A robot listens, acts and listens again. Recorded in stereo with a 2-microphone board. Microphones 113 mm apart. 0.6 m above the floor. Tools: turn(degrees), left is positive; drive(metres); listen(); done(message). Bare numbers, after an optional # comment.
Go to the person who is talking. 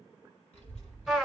turn(90)
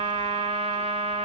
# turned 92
listen()
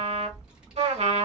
# The child speaking is now 10° right.
turn(-10)
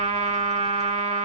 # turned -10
listen()
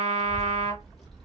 drive(1.0)
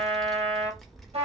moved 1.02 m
drive(1.0)
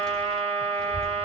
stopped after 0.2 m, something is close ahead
done("I am next to the child speaking.")